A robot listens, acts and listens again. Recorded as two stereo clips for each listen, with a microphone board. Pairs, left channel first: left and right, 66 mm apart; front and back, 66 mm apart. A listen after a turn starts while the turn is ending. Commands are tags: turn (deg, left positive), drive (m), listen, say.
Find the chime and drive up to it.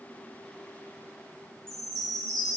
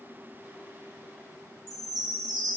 <turn deg="170"/>
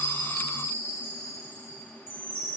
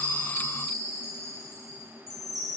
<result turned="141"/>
<turn deg="30"/>
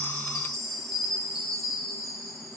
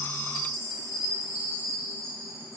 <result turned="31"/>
<drive m="1.0"/>
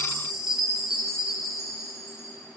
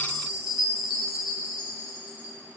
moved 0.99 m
<drive m="1.0"/>
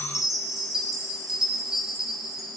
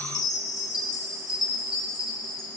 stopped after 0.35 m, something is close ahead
<say>Arrived at the chime, straight ahead.</say>